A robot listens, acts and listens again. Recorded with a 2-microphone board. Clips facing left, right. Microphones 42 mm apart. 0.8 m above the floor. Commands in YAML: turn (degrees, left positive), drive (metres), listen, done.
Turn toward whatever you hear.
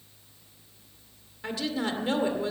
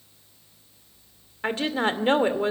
turn: -45
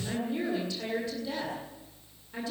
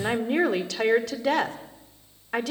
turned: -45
turn: -90
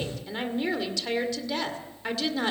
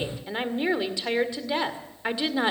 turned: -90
turn: -20
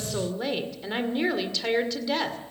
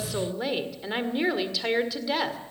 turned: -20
done: "Facing the woman speaking, 2 to 4 m away."